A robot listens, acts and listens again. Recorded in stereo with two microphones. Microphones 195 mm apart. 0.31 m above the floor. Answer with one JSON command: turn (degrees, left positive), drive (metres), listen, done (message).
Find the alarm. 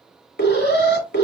{"turn": 65}
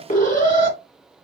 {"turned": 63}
{"turn": 45}
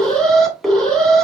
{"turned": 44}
{"done": "Found it: an alarm, straight ahead."}